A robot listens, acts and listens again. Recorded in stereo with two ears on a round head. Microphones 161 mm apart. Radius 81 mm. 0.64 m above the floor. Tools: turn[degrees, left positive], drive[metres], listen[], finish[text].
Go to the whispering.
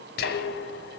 Thought: The whispering: about 55° left or 125° left.
Action: turn[55]
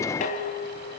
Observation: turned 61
Action: listen[]
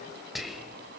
Action: drive[1.0]
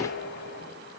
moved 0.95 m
Action: listen[]
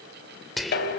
Action: drive[1.0]
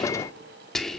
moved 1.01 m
Action: drive[1.0]
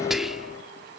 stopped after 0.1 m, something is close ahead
Action: finish[Arrived at the whispering, straight ahead.]